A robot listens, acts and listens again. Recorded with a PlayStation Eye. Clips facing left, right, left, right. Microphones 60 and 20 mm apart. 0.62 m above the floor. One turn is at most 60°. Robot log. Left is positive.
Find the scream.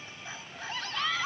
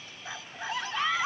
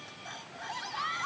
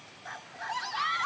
cmd yaw -30
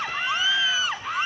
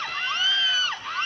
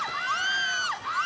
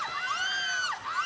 note: So it is at 15° left.
cmd yaw +15
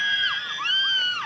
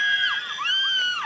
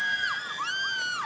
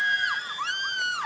end: Found it: a scream, straight ahead.